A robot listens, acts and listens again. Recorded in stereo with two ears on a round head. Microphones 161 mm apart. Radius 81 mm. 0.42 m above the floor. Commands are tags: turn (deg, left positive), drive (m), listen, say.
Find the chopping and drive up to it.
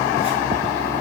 <listen/>
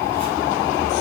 <listen/>
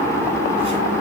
<say>I can't make out chopping to turn to.</say>